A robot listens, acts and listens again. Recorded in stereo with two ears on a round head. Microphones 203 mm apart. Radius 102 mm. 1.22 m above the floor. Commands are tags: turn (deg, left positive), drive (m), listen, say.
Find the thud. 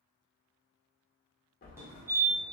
<turn deg="40"/>
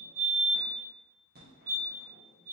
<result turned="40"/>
<listen/>
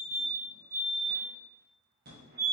<say>I heard a thud, but can't make it out now. It was about straight ahead or 100° left.</say>